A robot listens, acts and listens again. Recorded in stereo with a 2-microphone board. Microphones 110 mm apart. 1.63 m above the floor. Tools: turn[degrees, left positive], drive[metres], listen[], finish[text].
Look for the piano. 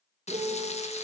Action: turn[-90]
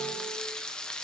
Action: listen[]
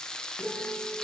Action: finish[Found it: a piano, straight ahead, 2 to 4 m away.]